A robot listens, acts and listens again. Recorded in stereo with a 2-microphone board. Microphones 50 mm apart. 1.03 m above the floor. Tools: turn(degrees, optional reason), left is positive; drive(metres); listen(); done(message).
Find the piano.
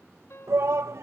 turn(degrees=55, reason="The piano: about 55° left or 125° left.")
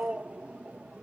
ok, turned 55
listen()
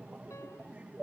listen()
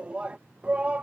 done("I heard a piano, but can't make it out now. It was about straight ahead or 70° left.")